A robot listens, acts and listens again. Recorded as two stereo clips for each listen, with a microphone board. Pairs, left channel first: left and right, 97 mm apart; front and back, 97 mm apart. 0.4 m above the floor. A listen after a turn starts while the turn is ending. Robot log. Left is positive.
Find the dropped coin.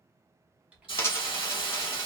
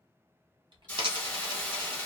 note: The dropped coin: 150° left.
cmd yaw +150
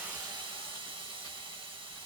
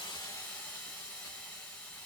end: I heard a dropped coin from this way, but can't make it out now.